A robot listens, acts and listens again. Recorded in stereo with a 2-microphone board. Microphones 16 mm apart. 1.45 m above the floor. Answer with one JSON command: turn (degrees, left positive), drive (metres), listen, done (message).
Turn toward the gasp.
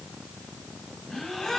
{"turn": 65}
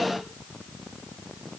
{"listen": true}
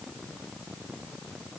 {"done": "I heard a gasp, but can't make it out now. It was about straight ahead or 50° left."}